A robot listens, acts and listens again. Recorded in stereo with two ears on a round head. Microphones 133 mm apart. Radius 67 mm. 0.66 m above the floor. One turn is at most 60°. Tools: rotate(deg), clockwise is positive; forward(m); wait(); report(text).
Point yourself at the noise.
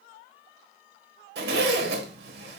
rotate(60)
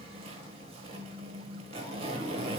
rotate(40)
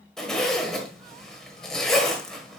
report("Found it: a zipper, straight ahead, 1 to 2 m away.")